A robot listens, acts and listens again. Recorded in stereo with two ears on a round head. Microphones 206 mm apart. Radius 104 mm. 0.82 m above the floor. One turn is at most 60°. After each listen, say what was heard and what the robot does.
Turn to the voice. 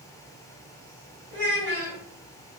The child speaking: about 50° right or 130° right. Turn 50° right.
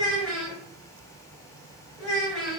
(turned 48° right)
Facing the child speaking, 1 to 2 m away.